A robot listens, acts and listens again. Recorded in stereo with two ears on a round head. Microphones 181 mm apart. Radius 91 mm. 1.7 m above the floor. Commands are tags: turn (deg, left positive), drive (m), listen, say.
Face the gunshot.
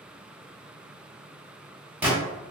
<turn deg="-30"/>
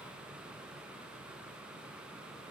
<listen/>
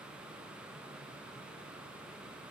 <say>I heard a gunshot, but can't make it out now. It was about 20° left or 140° right.</say>